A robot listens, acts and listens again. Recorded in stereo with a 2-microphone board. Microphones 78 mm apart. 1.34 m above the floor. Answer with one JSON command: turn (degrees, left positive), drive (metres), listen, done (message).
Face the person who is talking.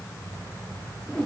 {"listen": true}
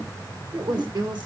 {"turn": -65}
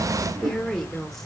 {"done": "Found it: a woman speaking, straight ahead, 1 to 2 m away."}